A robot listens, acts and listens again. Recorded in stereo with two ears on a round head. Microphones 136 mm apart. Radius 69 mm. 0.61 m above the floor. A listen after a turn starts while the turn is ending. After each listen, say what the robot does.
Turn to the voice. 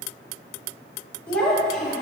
Turn 30° left.
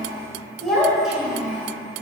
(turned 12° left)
Turn 30° right.
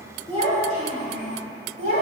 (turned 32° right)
Turn 125° right.
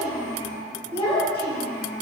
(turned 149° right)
Turn 30° left.
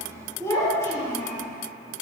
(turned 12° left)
Turn 20° left.
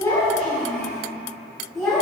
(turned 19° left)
Found it: a child speaking, straight ahead.